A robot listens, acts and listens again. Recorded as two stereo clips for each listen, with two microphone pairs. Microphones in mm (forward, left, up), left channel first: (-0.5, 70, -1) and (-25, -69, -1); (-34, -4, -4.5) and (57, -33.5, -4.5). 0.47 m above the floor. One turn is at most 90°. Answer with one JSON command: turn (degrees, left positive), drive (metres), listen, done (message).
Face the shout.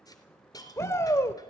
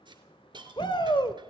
{"turn": 90}
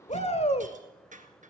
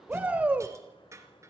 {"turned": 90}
{"turn": 55}
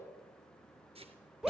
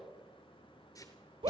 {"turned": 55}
{"turn": -15}
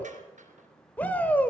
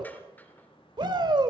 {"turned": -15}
{"done": "Facing the shout."}